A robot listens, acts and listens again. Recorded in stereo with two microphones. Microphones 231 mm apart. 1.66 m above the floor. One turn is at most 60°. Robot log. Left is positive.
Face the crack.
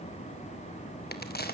note: The crack: about 45° left or 135° left.
cmd yaw +45
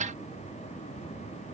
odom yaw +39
cmd idle
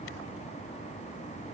end: I heard a crack, but can't make it out now. It was about 5° left or 100° left.